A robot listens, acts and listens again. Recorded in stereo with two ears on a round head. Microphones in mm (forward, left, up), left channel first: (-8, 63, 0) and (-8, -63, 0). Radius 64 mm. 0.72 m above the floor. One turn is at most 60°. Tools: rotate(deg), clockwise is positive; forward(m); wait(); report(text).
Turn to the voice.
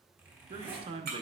rotate(35)
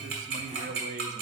rotate(60)
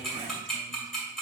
rotate(40)
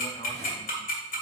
wait()
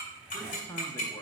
rotate(-25)
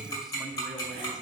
wait()
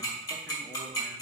wait()
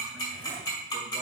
report("Facing where the man speaking came from. I can't hear it now.")